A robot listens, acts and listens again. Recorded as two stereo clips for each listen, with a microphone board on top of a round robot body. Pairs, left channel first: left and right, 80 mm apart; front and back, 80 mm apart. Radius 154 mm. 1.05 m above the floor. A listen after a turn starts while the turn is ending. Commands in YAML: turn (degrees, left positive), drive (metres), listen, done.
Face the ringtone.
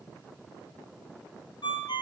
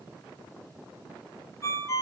turn: 55
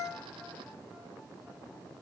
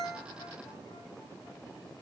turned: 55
listen: true
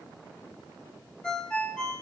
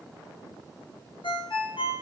turn: 10
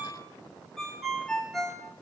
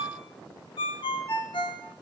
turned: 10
done: "Found it: a ringtone, straight ahead, under 1 m away."